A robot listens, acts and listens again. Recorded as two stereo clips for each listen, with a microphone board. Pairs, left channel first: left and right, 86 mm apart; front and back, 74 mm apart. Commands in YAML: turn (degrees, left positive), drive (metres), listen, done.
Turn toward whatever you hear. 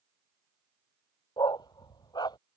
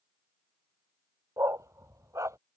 turn: 130
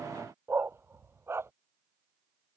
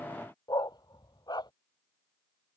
turn: -30
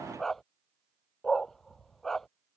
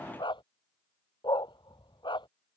done: "Found it: a dog barking, straight ahead."